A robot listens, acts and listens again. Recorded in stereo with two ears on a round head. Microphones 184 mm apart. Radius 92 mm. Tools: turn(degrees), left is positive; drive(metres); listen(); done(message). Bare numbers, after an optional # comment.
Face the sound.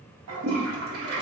# The toilet flushing: about 75° right or 105° right.
turn(-75)
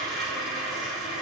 done("Facing the toilet flushing, under 1 m away.")